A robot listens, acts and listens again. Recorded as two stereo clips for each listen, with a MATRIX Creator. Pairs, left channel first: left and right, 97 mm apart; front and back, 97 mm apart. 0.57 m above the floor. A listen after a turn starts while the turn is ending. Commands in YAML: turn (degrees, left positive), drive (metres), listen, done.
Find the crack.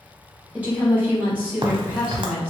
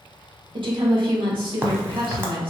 turn: -115
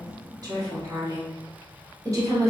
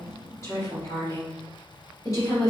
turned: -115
done: "Facing where the crack came from. I can't hear it now."